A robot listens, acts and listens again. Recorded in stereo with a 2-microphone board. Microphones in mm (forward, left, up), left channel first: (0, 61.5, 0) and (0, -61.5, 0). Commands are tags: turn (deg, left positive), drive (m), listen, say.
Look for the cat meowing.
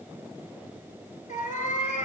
<turn deg="90"/>
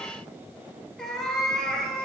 <say>Facing the cat meowing.</say>